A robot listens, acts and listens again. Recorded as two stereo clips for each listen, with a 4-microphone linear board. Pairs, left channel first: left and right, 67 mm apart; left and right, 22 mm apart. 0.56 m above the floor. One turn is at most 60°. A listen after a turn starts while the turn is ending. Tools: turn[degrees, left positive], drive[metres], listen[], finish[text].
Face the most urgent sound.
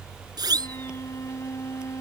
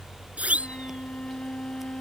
Action: turn[-60]
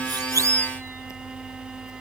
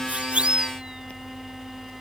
Thought: So it is at 40° right.
Action: turn[-40]
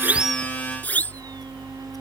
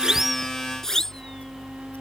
Thought: The siren is now 25° left.
Action: turn[25]
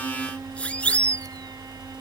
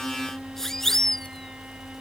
Thought: The siren is now 15° left.
Action: turn[15]
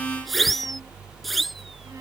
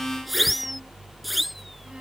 Action: finish[Facing the siren.]